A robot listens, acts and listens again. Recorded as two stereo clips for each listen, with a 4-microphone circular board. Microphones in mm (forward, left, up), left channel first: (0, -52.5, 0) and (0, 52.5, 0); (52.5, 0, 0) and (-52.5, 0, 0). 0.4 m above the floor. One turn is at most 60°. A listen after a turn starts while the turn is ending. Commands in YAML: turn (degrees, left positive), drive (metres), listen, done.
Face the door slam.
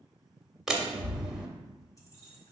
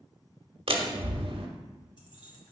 turn: 60
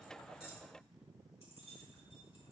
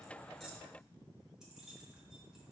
turn: 60
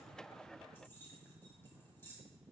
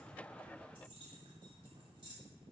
turn: 55
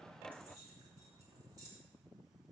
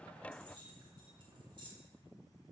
done: "I heard a door slam from this way, but can't make it out now."